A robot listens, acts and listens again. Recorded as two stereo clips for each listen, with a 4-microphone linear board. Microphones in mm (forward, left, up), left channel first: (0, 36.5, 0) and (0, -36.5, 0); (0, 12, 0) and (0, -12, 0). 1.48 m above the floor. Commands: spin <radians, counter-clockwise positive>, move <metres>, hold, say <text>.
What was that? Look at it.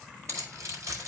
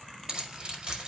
spin -0.79
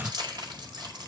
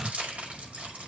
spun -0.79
spin -1.57
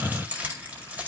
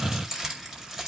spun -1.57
spin -0.35
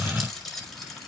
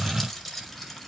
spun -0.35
say Found it: keys jangling, straight ahead.